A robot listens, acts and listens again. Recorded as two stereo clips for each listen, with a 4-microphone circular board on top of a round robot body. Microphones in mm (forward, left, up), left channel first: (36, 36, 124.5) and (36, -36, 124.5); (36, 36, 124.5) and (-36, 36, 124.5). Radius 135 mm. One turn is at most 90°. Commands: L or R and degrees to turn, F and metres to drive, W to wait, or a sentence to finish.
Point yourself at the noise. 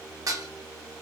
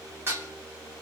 R90
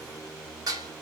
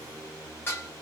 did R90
R60
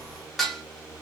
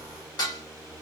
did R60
Facing the dishes clattering.